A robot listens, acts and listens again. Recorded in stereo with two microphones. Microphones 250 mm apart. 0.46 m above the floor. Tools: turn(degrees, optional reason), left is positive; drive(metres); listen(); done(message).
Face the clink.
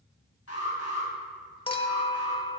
turn(degrees=20, reason="The clink: about 20° left or 160° left.")
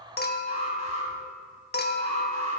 turn(degrees=140, reason="So it is at 140° left.")
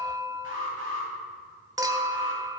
turn(degrees=-15, reason="The clink is now 15° right.")
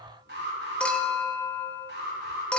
done("Found it: a clink, straight ahead.")